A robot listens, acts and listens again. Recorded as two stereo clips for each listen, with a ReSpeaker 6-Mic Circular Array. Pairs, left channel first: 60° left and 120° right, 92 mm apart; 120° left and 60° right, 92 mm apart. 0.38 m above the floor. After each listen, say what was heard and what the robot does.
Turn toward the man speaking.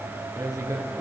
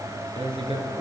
The man speaking: 65° right. Turn 65° right.
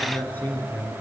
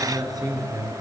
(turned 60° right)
The man speaking is now 15° right. Turn 15° right.
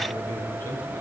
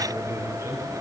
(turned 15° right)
Found it: a man speaking, straight ahead.